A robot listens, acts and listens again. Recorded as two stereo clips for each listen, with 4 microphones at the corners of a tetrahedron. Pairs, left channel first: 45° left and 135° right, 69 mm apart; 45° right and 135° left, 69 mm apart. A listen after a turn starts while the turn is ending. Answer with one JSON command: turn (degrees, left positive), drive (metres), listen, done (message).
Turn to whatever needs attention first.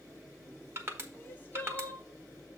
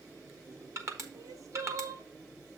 {"turn": 105}
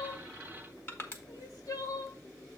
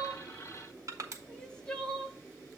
{"turn": 30}
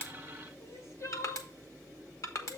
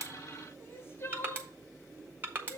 {"turn": 10}
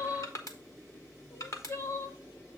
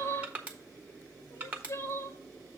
{"done": "Found it: crying, straight ahead, under 1 m away."}